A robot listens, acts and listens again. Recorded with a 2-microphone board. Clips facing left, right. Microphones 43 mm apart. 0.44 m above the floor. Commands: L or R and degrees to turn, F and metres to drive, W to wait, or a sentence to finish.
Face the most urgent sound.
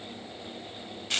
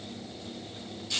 W
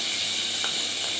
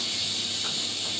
W
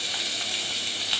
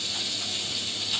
I can't make out anything urgent to turn to.